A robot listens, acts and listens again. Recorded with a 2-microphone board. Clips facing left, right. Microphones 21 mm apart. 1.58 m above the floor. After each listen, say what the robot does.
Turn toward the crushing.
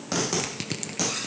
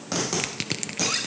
Turn 25° right.
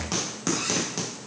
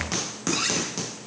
Keep listening.
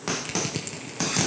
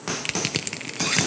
Turn 125° right.
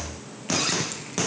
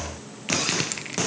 Turn 50° right.
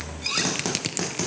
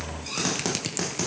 Turn 20° left.
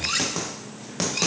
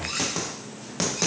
Keep listening.
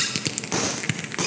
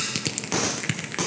Turn 10° left.
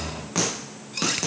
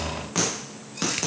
Keep listening.
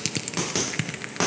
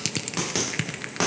Found it: crushing, straight ahead.